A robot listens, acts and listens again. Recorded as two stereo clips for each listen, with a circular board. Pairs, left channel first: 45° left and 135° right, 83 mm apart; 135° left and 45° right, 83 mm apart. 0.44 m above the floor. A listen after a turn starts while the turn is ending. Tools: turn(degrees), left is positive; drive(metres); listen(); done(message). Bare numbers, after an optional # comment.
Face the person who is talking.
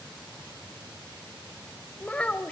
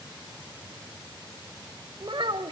# The child speaking: 30° right.
turn(-30)
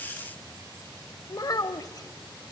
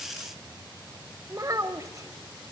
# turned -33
done("Facing the child speaking.")